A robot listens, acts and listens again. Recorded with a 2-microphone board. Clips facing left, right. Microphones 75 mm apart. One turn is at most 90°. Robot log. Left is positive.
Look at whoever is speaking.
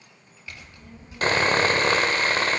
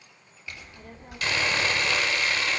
note: The child speaking: about 60° right or 120° right.
cmd yaw -60
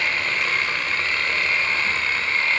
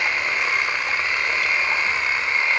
cmd idle
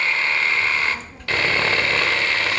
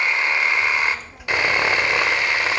note: So it is at 10° right.
cmd yaw -10
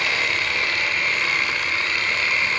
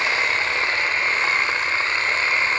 cmd idle
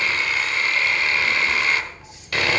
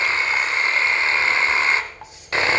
end: Found it: a child speaking, straight ahead, 1 to 2 m away.